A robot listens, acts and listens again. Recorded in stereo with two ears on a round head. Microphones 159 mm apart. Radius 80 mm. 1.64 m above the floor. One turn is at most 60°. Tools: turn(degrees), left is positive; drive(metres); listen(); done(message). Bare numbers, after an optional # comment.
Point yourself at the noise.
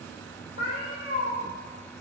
# The cat meowing: about 55° left or 125° left.
turn(55)
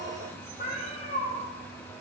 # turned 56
# So it is at 55° left.
turn(55)
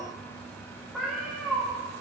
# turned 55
done("Found it: a cat meowing, straight ahead, 1 to 2 m away.")